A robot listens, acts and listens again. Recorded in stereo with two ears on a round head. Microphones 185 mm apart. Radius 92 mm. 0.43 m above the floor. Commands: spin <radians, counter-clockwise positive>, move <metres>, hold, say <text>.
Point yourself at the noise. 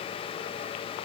hold
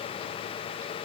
hold
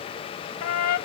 spin 1.57
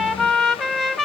say Facing the trumpet.